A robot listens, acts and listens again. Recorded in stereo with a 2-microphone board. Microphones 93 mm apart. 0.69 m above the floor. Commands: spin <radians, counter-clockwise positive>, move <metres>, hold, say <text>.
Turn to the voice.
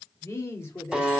spin 0.44
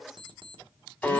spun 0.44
hold
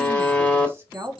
spin -0.52
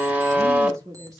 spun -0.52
spin -0.61
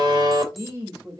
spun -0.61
spin -0.52
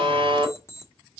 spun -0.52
hold
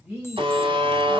say Facing the woman speaking.